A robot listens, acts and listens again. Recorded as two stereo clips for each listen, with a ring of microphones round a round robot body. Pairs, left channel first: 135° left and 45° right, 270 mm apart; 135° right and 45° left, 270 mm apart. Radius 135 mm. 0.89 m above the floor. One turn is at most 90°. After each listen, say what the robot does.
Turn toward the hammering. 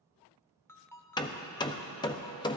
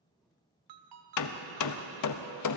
Turn 90° right.
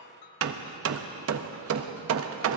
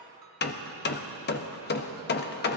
Turn 80° right.
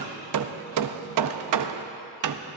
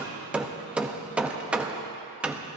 Turn 40° right.
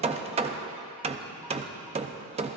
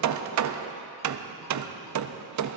Turn 20° left.
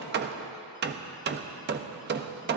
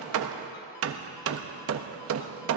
Facing the hammering, under 1 m away.